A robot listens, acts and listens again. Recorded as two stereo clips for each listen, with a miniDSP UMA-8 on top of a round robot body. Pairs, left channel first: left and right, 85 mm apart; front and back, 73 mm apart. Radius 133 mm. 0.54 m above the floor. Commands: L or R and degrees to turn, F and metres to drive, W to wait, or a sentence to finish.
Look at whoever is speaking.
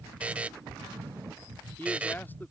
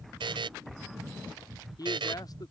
L25
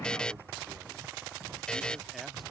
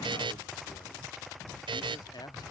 W
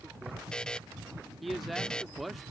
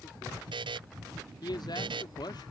Found it: a man speaking, straight ahead.